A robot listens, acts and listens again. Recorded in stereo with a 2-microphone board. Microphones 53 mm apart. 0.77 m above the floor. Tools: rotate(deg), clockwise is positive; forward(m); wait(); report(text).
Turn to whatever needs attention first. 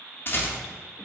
wait()
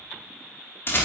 wait()
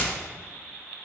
report("I can't make out anything urgent to turn to.")